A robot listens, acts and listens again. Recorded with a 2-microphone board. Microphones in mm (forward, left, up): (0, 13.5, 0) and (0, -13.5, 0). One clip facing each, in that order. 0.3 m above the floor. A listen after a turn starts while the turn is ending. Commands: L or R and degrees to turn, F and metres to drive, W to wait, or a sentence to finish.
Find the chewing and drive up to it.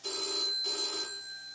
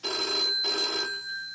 W
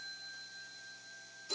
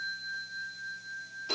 W
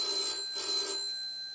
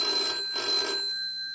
I can't make out chewing to turn to.